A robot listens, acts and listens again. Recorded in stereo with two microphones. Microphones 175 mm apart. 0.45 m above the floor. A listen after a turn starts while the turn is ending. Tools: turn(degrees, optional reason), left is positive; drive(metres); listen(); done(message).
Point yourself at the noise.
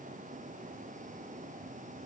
listen()
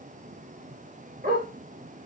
turn(degrees=-55, reason="The dog barking: about 55° right or 125° right.")
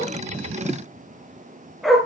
done("Found it: a dog barking, straight ahead.")